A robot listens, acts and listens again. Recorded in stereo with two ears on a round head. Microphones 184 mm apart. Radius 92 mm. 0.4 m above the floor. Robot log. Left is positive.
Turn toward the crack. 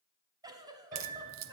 note: The crack: about 70° right or 110° right.
cmd yaw -70
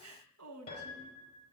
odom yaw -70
cmd idle
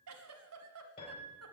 end: I heard a crack, but can't make it out now. It was about straight ahead or 40° right.